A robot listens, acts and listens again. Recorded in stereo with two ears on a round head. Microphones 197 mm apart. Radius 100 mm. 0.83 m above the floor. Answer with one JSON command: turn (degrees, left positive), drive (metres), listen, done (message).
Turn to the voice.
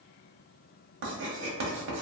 {"listen": true}
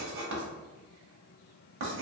{"listen": true}
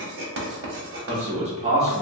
{"turn": -30}
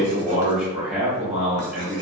{"done": "Found it: a man speaking, straight ahead."}